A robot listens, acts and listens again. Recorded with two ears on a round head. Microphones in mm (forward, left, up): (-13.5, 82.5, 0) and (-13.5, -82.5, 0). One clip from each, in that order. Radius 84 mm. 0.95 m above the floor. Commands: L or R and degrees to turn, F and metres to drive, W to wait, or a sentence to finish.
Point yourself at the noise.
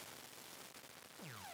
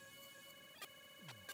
W
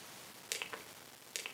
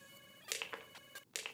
L30
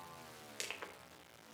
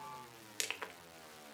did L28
R25
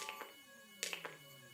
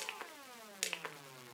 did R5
R20
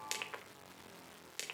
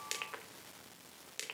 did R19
Found it: crushing, straight ahead, 1 to 2 m away.